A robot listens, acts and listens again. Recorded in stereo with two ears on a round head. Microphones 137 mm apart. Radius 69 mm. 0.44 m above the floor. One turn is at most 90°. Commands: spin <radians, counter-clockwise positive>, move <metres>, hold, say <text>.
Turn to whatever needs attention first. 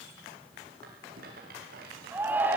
spin -0.52
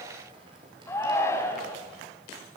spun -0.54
spin 0.26
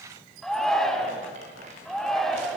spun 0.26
say Facing the shout.